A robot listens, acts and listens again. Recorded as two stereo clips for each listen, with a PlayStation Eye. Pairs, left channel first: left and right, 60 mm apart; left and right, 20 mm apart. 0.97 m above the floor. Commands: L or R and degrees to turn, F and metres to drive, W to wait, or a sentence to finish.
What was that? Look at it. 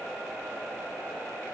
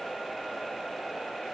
W
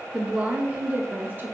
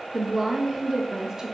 R35
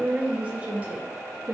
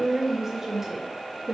R35
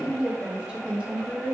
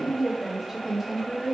R20
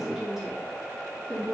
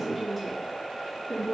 R10
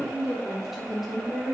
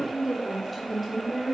Found it: a woman speaking, straight ahead.